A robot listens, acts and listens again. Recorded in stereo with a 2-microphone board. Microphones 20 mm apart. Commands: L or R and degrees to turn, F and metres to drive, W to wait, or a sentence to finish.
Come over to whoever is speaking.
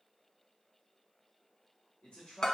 L60
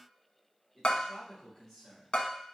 L30
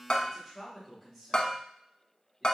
F1.0
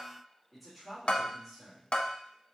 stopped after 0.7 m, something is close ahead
Arrived at the man speaking, straight ahead.